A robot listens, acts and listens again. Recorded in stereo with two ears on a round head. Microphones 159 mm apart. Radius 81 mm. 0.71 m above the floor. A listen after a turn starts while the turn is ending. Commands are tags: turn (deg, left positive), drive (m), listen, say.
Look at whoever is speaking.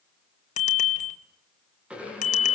<listen/>
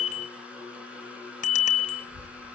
<turn deg="-45"/>
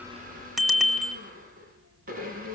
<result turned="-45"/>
<turn deg="-90"/>
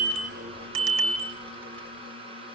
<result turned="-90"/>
<listen/>
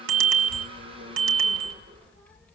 <say>Found it: a child speaking, straight ahead.</say>